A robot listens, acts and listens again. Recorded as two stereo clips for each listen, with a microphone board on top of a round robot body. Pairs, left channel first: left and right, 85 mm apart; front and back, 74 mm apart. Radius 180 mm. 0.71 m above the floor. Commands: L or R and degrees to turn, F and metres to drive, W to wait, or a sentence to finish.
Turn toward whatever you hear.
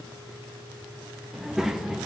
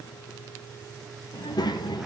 Found it: a child speaking, straight ahead, under 1 m away.